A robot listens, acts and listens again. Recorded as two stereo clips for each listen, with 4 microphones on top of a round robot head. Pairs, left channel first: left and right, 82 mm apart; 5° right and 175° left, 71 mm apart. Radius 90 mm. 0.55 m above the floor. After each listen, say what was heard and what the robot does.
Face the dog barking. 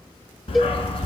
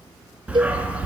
The dog barking: 100° left. Turn 100° left.
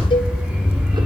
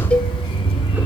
The dog barking is now 10° right. Turn 10° right.
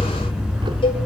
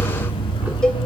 Found it: a dog barking, straight ahead, 1 to 2 m away.